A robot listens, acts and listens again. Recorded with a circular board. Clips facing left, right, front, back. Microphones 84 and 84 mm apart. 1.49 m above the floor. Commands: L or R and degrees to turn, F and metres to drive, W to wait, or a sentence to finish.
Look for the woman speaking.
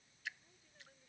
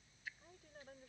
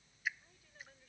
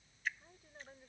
R120
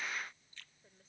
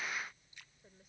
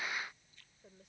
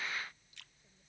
W
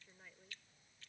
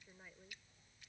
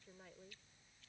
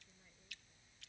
R10
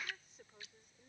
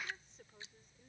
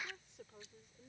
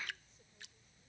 Facing the woman speaking.